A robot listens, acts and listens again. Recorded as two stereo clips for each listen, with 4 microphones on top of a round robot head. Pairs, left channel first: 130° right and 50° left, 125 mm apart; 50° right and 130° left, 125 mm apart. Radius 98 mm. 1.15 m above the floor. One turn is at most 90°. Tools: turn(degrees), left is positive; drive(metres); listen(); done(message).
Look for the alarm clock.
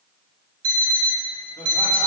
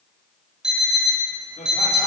turn(degrees=45)
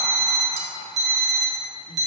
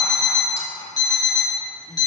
turn(degrees=15)
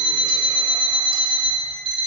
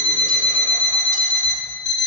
done("Found it: an alarm clock, straight ahead, 1 to 2 m away.")